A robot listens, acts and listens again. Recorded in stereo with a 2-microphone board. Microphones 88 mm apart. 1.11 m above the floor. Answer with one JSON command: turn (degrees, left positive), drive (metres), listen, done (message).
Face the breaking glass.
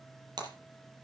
{"turn": -55}
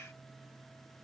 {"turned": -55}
{"listen": true}
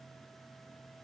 {"done": "I heard breaking glass, but can't make it out now. It was about straight ahead or 70° right."}